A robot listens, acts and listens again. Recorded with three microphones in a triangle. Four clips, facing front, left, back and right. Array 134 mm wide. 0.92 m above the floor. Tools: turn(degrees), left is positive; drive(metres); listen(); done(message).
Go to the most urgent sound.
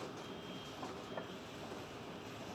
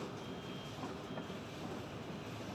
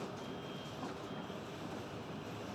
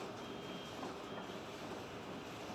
listen()
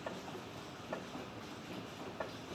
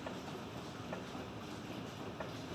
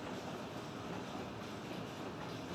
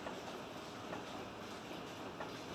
listen()
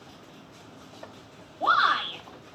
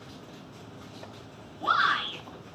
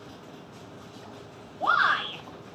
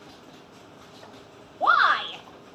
turn(degrees=-85)
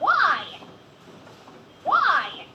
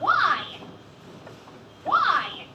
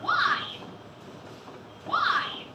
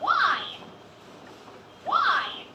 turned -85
drive(metres=1.0)
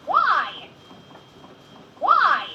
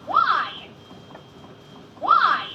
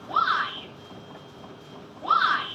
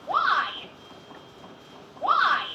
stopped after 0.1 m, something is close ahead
done("Blocked. The shout is further on, straight ahead.")